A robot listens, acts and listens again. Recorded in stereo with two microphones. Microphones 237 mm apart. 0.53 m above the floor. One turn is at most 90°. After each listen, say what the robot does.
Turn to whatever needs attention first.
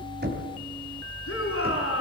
Turn 65° left.
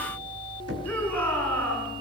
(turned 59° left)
Found it: a shout, straight ahead.